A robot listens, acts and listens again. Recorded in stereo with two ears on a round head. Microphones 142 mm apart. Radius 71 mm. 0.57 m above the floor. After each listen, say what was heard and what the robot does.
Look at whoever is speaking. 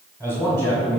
The man speaking: about 25° right or 155° right. Turn 25° right.
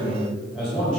Facing the man speaking.